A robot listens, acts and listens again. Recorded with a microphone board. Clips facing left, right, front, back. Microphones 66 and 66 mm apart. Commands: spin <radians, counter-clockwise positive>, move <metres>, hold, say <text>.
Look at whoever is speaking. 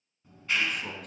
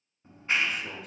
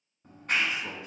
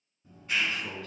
spin 1.22
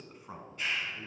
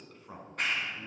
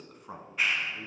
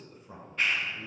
spin 0.35
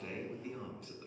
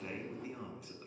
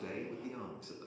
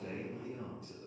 say Found it: a man speaking, straight ahead.